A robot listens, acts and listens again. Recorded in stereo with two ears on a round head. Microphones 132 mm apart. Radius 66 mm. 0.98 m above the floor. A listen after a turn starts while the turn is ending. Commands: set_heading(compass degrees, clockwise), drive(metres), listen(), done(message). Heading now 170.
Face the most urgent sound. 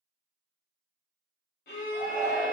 set_heading(130)
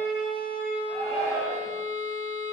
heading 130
done("Facing the shout, 2 to 4 m away.")